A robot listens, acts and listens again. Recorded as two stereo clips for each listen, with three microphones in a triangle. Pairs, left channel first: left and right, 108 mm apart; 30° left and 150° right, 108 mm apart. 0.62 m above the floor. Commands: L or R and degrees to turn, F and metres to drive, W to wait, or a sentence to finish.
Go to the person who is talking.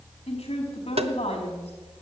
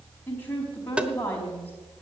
L100
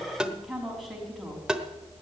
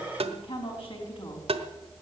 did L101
F1.0
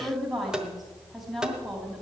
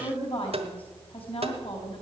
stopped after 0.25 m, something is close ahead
Blocked. The woman speaking is further on, straight ahead.